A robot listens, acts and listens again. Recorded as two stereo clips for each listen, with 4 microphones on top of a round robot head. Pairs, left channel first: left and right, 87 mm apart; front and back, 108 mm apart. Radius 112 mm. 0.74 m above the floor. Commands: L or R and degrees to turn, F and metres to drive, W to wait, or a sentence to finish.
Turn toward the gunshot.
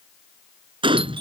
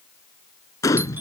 R65
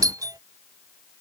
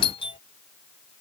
I heard a gunshot from this way, but can't make it out now.